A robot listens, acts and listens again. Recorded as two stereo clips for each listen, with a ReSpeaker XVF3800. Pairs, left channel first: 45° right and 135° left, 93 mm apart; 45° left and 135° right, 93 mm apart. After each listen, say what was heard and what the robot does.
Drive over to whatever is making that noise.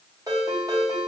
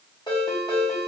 The ringtone: 85° left. Turn 85° left.
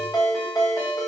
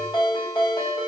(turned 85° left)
The ringtone is now 10° left. Turn 10° left.
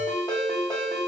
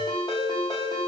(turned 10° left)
Drive 1.0 m forward.
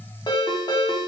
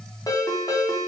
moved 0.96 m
Drive 1.0 m forward.
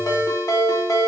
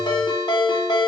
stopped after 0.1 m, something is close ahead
Arrived at the ringtone, straight ahead.